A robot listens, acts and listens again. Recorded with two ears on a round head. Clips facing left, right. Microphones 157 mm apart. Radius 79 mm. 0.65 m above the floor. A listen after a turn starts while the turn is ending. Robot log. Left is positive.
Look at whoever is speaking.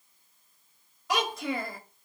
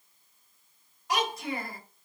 note: The child speaking: about 65° left or 115° left.
cmd yaw +65
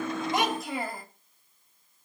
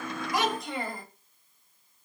end: Facing the child speaking.